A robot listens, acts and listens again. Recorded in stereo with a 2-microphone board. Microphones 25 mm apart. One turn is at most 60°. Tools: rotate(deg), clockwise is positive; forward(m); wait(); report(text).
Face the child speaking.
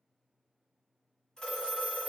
wait()
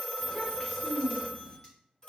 rotate(-15)
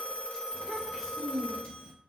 report("Facing the child speaking, under 1 m away.")